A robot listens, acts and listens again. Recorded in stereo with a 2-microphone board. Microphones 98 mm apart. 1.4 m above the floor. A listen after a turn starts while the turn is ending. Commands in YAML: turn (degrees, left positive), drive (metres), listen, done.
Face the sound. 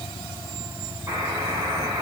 turn: -30
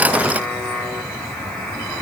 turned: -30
done: "Found it: a buzzer, straight ahead, over 4 m away."